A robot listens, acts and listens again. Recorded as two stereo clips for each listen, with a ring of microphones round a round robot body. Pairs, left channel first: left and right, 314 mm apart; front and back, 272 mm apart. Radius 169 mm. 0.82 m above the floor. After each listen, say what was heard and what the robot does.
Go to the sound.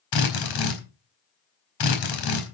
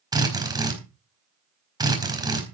The drill: 105° left. Turn 105° left.
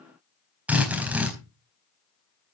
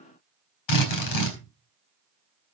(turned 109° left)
Drive 1.0 m forward.
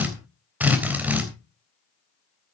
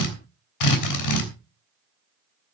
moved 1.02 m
Drive 1.0 m forward.
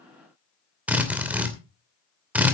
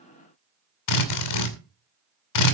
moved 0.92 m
Drive 1.0 m forward.
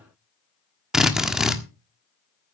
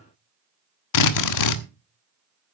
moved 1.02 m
Drive 1.0 m forward.
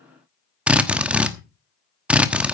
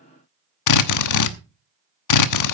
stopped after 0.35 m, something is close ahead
I am next to the drill.